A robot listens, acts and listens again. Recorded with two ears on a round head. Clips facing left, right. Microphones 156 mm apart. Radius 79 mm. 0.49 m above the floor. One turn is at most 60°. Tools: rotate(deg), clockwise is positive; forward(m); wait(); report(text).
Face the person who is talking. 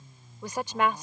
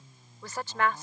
rotate(-30)
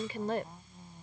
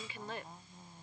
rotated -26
rotate(-60)
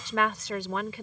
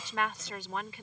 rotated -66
rotate(-60)
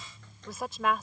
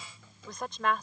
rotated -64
report("Found it: a woman speaking, straight ahead.")